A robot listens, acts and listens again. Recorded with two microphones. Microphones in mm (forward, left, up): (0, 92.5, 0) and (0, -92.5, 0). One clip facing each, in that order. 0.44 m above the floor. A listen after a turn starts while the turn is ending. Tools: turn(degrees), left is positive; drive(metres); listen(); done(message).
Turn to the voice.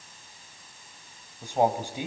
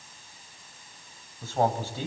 turn(degrees=15)
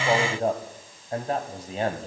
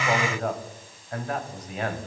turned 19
turn(degrees=150)
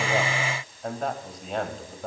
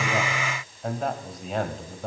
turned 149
done("Found it: a man speaking, straight ahead, 1 to 2 m away.")